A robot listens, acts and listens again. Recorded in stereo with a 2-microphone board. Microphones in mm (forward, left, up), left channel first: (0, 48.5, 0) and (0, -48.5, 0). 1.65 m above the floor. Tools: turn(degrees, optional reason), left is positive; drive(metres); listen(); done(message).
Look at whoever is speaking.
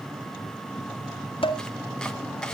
listen()
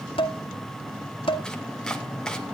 listen()
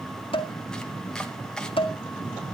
done("I can't make out anyone speaking to turn to.")